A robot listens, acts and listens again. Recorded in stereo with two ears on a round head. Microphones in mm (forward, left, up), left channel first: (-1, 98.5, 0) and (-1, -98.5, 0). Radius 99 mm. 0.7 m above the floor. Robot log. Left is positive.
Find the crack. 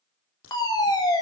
note: The crack: about 65° left or 115° left.
cmd yaw +65
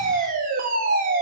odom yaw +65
cmd idle
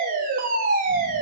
end: I heard a crack, but can't make it out now. It was about straight ahead or 50° left.